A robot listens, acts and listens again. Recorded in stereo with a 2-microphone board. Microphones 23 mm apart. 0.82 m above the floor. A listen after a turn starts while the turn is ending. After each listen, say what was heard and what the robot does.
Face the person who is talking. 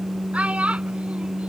The child speaking: about 65° right or 115° right. Turn 65° right.
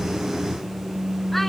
Keep listening.
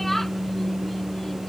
So it is at 10° left. Turn 10° left.
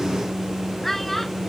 The child speaking is now 10° left. Turn 10° left.
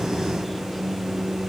Keep listening.
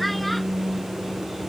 Found it: a child speaking, straight ahead.